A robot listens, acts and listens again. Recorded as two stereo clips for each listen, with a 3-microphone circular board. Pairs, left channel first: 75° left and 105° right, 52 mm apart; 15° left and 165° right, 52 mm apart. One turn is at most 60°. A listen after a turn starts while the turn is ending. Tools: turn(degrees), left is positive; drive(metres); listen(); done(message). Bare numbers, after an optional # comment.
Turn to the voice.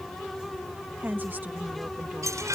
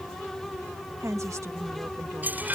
# The woman speaking: 155° right.
turn(-60)
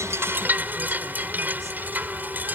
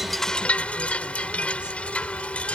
# Nothing new. It was at 95° right.
turn(-60)
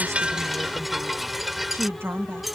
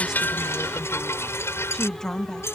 # The woman speaking is now 65° right.
turn(-60)
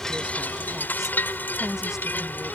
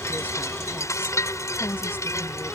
listen()
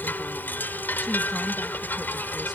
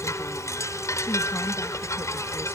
listen()
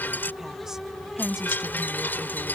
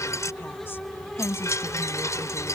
# The woman speaking is now 25° right.
turn(-25)
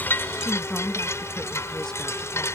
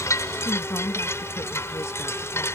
done("Found it: a woman speaking, straight ahead.")